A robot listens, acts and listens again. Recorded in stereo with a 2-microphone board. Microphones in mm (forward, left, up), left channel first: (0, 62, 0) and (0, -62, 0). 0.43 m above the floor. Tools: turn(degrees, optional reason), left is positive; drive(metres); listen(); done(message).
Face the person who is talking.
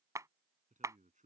turn(degrees=-90)
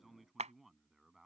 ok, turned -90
done("Facing the man speaking.")